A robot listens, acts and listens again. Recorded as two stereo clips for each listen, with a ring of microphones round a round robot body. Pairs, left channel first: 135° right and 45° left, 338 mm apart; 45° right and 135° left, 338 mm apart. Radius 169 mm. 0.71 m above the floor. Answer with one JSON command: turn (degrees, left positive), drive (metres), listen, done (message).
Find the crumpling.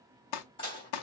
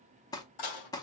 {"turn": -125}
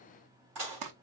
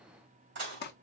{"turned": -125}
{"turn": 15}
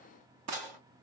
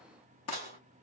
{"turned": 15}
{"done": "Found it: crumpling, straight ahead, under 1 m away."}